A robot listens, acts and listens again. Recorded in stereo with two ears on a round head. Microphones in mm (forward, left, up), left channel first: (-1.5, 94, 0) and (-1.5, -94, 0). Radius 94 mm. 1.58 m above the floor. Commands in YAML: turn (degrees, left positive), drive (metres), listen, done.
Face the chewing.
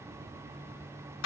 listen: true
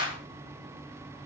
listen: true
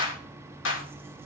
done: "I can't make out chewing to turn to."